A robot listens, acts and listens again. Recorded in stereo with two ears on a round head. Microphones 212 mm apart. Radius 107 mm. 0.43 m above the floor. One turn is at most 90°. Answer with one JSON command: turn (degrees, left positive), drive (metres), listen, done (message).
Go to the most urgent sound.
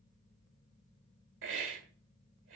{"listen": true}
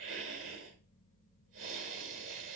{"listen": true}
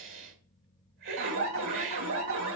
{"turn": -65}
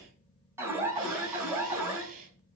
{"turn": -10}
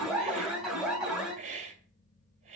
{"drive": 1.0}
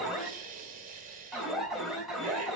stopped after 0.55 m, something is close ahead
{"done": "Something is in my way. I am facing the alarm but have not reached it."}